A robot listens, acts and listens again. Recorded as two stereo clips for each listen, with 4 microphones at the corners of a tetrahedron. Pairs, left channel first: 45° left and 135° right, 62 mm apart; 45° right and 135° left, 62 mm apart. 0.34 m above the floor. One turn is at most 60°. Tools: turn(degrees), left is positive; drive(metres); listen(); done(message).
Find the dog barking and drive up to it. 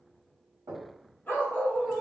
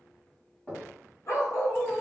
turn(degrees=-15)
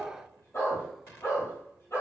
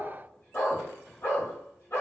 drive(metres=1.0)
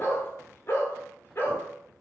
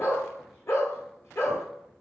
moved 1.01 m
drive(metres=1.0)
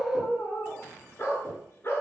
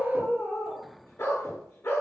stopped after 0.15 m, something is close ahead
done("Arrived at the dog barking, straight ahead.")